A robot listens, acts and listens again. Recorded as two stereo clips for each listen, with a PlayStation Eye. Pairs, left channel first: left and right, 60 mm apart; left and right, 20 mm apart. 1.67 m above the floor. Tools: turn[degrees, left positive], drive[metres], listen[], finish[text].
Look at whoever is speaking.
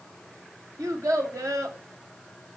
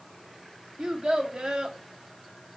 Thought: The child speaking: about 55° right or 125° right.
Action: turn[-55]
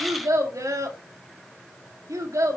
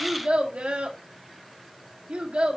Thought: So it is at 65° right.
Action: turn[-65]
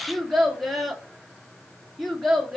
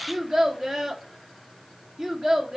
Action: finish[Facing the child speaking.]